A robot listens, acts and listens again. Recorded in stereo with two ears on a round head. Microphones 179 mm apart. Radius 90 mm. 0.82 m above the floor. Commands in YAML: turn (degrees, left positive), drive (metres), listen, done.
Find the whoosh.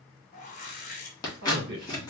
turn: 40
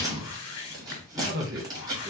turn: 100
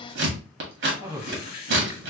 turn: 45
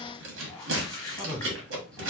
turn: 20
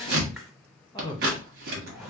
done: "Facing the whoosh."